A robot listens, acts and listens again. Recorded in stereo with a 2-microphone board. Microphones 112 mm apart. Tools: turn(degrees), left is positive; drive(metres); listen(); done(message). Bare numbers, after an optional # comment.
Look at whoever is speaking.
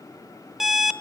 listen()
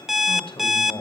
# The man speaking: about 60° left or 120° left.
turn(60)
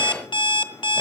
listen()
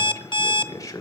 # So it is at 40° left.
turn(40)
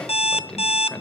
# The man speaking is now 10° left.
turn(10)
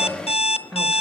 done("Facing the man speaking, 2 to 4 m away.")